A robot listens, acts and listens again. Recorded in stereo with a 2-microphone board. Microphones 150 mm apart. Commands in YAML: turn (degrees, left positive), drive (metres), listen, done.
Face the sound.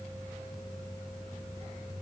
listen: true
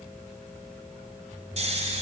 turn: -50
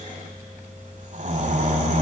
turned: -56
turn: -65
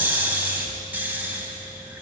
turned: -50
turn: -15
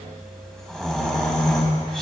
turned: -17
done: "Facing the snoring, 1 to 2 m away."